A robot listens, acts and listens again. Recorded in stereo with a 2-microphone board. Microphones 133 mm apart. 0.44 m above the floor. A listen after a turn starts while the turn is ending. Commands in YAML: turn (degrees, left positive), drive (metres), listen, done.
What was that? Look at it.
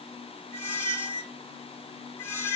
turn: 20
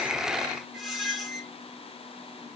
done: "Found it: a squeak, straight ahead, 2 to 4 m away."